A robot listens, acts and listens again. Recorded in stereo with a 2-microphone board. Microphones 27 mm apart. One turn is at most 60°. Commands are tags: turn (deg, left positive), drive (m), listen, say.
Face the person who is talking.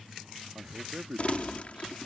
<turn deg="-45"/>
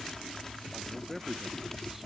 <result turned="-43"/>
<turn deg="-10"/>
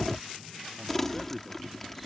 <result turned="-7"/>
<listen/>
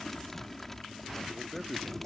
<say>Facing the man speaking.</say>